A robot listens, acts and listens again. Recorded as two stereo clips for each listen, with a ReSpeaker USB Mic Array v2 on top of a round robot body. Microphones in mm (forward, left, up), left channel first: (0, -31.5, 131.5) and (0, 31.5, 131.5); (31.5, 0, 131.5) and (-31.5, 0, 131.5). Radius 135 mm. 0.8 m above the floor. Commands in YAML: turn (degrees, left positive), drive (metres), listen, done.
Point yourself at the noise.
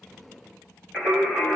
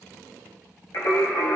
turn: -15
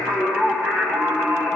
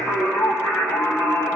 done: "Facing the singing, over 4 m away."